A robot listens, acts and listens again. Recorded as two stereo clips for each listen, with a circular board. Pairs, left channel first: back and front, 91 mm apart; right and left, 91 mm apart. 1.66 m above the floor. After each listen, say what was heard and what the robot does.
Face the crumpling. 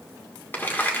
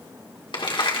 The crumpling: 110° right. Turn 110° right.
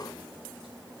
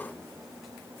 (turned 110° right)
Keep listening.
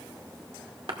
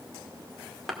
Found it: crumpling, straight ahead.